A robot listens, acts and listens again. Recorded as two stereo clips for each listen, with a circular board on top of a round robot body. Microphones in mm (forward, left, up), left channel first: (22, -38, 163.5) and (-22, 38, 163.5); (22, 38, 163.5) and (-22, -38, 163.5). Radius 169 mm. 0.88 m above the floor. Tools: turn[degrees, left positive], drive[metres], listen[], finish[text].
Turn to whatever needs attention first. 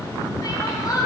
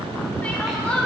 Thought: The crying: 15° right.
Action: turn[-15]
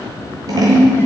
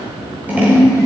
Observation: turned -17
Action: listen[]
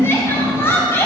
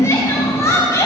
Action: finish[Found it: crying, straight ahead, 1 to 2 m away.]